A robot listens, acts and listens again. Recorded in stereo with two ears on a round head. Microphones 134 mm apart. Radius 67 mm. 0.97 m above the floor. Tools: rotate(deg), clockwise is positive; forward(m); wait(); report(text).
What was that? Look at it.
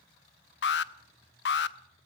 rotate(-90)
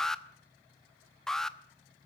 report("Facing the alarm, under 1 m away.")